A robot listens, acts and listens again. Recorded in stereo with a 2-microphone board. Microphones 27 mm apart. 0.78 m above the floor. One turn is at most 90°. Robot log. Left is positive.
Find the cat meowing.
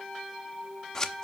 cmd idle
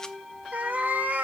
note: The cat meowing: about 70° right or 110° right.
cmd yaw -70
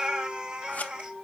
note: So it is at 35° right.
cmd yaw -35
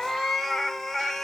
note: The cat meowing is now 10° left.
cmd yaw +10
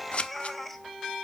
end: Facing the cat meowing.